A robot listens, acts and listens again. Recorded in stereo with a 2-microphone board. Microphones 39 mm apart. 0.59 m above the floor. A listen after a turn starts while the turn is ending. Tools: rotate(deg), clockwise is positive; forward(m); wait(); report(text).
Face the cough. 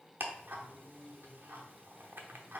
wait()
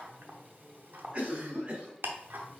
rotate(35)
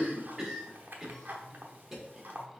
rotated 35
report("Found it: a cough, straight ahead.")